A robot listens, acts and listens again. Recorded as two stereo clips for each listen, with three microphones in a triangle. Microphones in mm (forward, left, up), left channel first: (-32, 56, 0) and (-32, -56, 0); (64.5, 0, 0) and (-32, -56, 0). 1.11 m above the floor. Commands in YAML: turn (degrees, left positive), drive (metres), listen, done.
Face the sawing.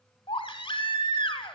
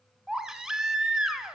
listen: true
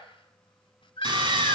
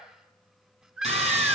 turn: -135
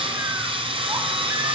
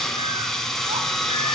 turn: -55
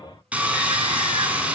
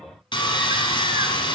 turn: -15
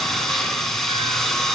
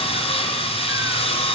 done: "Found it: sawing, straight ahead."